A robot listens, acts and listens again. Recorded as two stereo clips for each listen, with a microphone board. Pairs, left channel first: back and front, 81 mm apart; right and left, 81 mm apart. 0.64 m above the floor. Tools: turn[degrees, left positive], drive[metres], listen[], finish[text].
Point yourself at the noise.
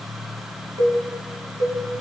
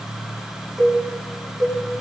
Action: finish[Facing the cowbell.]